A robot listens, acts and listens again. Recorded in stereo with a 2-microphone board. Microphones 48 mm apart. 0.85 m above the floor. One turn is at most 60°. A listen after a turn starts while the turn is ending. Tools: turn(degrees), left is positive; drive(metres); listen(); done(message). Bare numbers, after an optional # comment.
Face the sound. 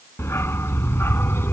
# The dog barking: about 60° left or 120° left.
turn(60)
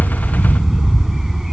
done("Facing the dog barking.")